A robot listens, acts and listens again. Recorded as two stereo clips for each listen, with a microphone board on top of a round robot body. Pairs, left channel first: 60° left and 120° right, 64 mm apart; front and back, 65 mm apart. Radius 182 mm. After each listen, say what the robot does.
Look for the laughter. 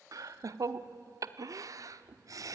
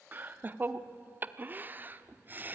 Turn 125° right.
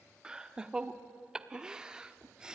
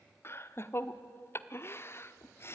Turn 45° right.
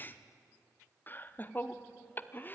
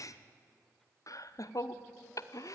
Facing the laughter, 1 to 2 m away.